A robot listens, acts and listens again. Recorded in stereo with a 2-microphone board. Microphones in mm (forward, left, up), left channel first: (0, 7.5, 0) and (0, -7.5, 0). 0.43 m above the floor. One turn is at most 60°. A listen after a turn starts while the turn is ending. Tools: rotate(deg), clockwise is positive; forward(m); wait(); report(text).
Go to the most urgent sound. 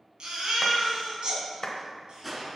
rotate(60)
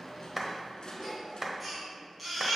rotate(10)
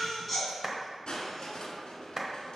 forward(1.0)
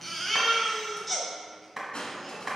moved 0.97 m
forward(1.0)
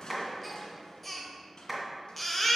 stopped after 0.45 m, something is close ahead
report("I am next to the baby crying.")